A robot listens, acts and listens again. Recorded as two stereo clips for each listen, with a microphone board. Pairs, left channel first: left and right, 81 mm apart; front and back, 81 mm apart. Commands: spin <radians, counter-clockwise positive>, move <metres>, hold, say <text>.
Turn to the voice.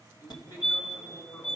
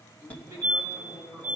spin 2.53
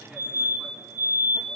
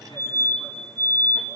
hold
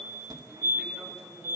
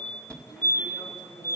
hold
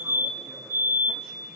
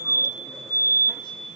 say Facing where the man speaking came from. I can't hear it now.